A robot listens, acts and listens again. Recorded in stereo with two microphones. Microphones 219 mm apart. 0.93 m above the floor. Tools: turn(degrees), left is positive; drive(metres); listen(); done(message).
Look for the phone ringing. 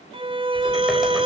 listen()
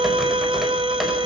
listen()
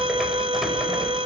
done("I can't make out a phone ringing to turn to.")